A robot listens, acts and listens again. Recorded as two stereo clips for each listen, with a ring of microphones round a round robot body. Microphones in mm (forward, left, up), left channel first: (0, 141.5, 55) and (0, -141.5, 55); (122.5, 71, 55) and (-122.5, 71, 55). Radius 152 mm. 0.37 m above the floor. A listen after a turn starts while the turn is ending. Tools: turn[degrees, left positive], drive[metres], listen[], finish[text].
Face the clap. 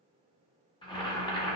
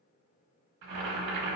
Action: listen[]
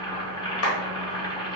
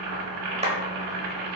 Thought: The clap: 120° left.
Action: turn[120]
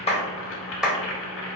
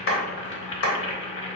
Action: finish[Found it: a clap, straight ahead, 1 to 2 m away.]